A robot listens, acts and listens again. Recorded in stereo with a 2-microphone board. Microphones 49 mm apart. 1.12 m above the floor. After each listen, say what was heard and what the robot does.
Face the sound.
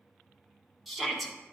Turn 30° left.
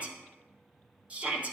So it is at 30° right. Turn 30° right.
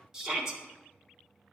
The shout is now 15° right. Turn 15° right.
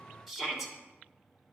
Facing the shout, 1 to 2 m away.